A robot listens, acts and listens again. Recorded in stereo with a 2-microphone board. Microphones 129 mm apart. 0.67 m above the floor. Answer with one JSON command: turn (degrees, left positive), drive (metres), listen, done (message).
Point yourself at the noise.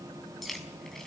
{"turn": 30}
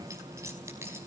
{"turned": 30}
{"turn": -20}
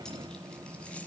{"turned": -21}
{"listen": true}
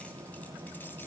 {"listen": true}
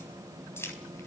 {"turn": 20}
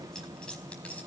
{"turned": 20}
{"turn": 10}
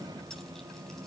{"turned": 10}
{"listen": true}
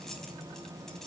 {"listen": true}
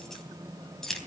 {"done": "Found it: keys jangling, straight ahead."}